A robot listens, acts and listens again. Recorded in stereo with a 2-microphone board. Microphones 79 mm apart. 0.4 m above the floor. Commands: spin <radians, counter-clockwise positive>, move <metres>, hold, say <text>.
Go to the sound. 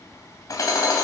spin 0.87
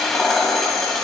move 1.0
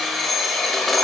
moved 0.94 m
move 1.0
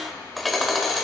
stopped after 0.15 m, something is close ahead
say Arrived at the hammering, straight ahead.